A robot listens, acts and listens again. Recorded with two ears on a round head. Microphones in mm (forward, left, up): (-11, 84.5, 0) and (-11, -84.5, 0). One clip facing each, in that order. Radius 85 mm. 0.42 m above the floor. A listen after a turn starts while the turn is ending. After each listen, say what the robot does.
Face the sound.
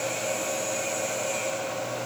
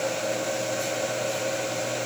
Keep listening.
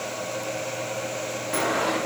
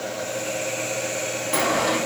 Turn 45° right.
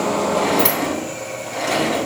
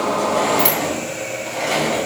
Facing the sliding door.